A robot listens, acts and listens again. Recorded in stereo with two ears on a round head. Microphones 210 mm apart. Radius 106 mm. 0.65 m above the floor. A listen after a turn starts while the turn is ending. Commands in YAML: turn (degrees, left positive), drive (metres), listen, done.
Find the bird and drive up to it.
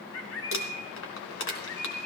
turn: 65
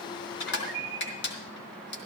drive: 1.0
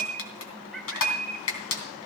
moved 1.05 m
drive: 1.0
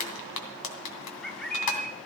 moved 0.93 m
drive: 1.0
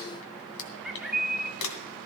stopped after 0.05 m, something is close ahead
done: "I am next to the bird."